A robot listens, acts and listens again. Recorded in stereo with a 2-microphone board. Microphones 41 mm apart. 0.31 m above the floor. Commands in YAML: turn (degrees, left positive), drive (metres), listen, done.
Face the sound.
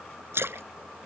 turn: -90
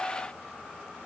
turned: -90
done: "Facing where the splash came from. I can't hear it now."